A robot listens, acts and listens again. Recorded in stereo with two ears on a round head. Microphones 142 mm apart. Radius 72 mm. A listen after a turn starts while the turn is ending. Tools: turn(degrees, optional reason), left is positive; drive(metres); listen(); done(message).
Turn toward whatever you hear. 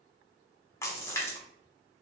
turn(degrees=20, reason="The splash: about 20° left or 160° left.")
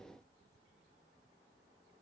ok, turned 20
listen()
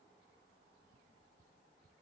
done("I heard a splash, but can't make it out now. It was about straight ahead or 140° left.")